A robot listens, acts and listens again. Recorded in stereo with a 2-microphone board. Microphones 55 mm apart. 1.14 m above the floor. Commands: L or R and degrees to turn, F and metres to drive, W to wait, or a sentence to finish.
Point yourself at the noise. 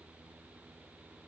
W
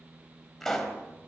L30
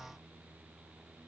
W
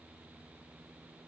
I heard a pop, but can't make it out now. It was about 25° right or 145° left.